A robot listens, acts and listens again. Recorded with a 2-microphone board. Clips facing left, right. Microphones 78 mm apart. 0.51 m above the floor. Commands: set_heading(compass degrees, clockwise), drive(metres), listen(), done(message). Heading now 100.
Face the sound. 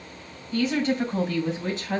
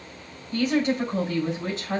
set_heading(145)
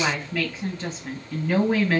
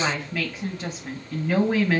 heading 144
set_heading(154)
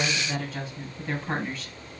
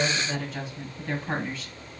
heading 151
done("Facing the woman speaking.")